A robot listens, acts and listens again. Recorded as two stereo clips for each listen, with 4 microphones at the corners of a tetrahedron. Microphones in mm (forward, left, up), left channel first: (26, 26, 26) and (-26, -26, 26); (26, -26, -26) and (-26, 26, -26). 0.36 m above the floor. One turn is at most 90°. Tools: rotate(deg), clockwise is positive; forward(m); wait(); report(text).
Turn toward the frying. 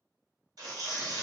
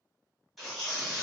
wait()
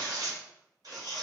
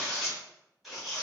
wait()
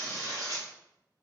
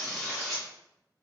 report("I can't make out frying to turn to.")